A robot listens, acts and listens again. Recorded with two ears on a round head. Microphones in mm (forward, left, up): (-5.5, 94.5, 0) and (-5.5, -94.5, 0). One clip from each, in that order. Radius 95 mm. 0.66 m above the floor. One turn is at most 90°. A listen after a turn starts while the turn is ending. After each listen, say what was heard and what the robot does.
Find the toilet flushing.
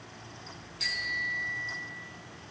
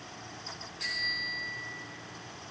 Keep listening.
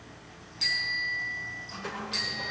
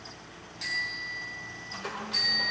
Turn 30° right.
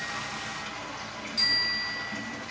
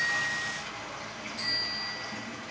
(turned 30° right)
So it is at 15° left. Turn 15° left.
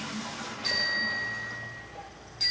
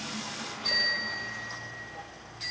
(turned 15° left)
Facing the toilet flushing.